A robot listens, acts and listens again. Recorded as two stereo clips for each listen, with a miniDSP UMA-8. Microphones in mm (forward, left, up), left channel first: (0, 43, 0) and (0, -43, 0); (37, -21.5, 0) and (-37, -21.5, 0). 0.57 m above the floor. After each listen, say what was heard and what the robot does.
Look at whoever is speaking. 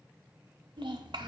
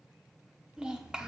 The child speaking: 100° right. Turn 100° right.
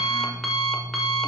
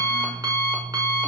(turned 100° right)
Keep listening.
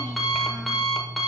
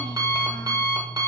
Keep listening.
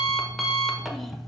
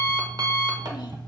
I heard a child speaking from this way, but can't make it out now.